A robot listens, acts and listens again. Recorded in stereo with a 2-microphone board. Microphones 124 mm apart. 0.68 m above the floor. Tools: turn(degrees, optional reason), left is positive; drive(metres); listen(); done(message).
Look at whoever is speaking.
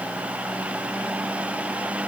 listen()
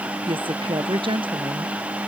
turn(degrees=-45, reason="The woman speaking: about 45° right or 135° right.")
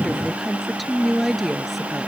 done("Found it: a woman speaking, straight ahead.")